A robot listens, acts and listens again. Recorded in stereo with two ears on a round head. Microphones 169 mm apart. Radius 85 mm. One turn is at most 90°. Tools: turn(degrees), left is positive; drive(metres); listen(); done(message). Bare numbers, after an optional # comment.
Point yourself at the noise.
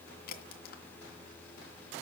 # The crack: about 50° left or 130° left.
turn(50)
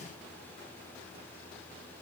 listen()
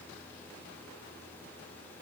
done("I heard a crack, but can't make it out now. It was about straight ahead or 80° left.")